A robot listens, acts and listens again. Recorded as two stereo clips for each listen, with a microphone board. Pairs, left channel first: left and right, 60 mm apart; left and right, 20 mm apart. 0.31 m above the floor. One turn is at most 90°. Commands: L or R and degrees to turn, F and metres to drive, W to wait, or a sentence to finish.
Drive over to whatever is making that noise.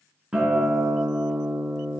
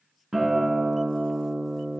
R30
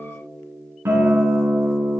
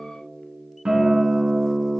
R90
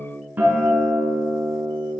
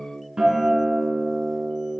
R35
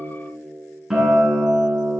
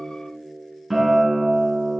R10
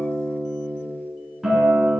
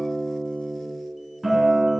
F1.0
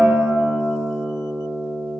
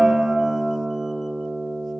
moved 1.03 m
R15
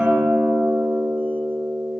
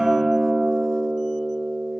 F1.0
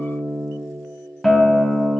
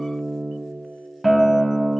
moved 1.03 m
F1.0
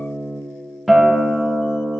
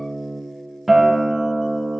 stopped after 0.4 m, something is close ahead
Arrived at the guitar, straight ahead.